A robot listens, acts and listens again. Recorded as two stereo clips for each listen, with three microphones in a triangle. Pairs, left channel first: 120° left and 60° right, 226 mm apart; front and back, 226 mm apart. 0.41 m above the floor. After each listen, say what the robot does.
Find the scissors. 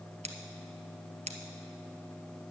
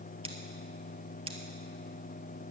Turn 120° right.
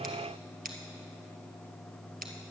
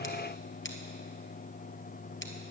Turn 15° right.
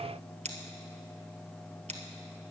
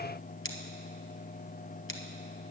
Facing the scissors, 1 to 2 m away.